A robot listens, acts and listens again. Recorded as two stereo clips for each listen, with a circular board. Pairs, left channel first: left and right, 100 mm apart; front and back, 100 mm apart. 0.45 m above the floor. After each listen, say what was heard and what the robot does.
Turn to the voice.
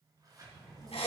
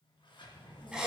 The child speaking: 50° left. Turn 50° left.
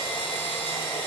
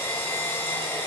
Keep listening.
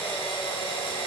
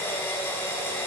Keep listening.
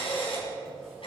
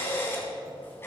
I heard a child speaking from this way, but can't make it out now.